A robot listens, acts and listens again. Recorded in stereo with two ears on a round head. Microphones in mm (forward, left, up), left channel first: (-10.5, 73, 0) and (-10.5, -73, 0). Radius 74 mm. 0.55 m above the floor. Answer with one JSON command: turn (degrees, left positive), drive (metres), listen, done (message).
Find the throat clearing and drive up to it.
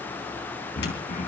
{"turn": 45}
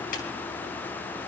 {"listen": true}
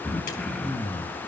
{"drive": 1.0}
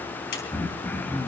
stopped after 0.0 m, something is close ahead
{"turn": 10}
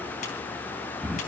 {"done": "Blocked. The throat clearing is further on, straight ahead."}